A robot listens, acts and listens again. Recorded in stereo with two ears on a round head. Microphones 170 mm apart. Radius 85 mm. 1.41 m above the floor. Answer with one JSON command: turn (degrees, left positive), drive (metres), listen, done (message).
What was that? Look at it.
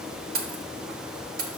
{"turn": -45}
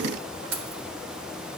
{"turn": -85}
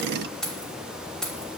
{"done": "Facing the keys jangling, 1 to 2 m away."}